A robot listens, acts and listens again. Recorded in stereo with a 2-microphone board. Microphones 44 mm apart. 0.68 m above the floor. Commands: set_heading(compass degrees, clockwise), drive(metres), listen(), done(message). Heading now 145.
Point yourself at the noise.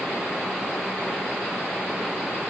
listen()
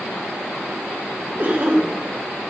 set_heading(185)
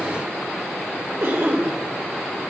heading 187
set_heading(282)
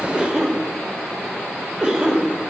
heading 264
set_heading(284)
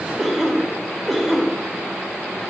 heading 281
done("Found it: a cough, straight ahead, 2 to 4 m away.")